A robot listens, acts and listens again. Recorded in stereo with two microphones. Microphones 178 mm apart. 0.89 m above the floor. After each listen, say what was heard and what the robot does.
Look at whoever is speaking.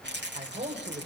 The man speaking: about 45° right or 135° right. Turn 45° right.
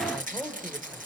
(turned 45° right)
Found it: a man speaking, straight ahead, 2 to 4 m away.